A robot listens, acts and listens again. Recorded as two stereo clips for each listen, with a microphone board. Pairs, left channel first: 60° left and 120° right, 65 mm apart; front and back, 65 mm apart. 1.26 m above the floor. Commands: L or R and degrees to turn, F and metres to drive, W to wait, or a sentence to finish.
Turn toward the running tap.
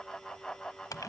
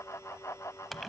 W
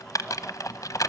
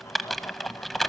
W
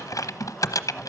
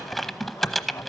I can't make out a running tap, only typing on a keyboard.